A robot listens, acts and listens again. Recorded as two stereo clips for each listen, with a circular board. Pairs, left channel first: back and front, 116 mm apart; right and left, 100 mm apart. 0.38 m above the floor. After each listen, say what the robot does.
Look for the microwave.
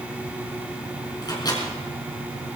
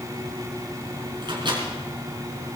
Turn 125° left.
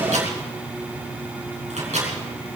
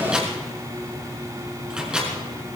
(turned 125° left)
Facing the microwave, over 4 m away.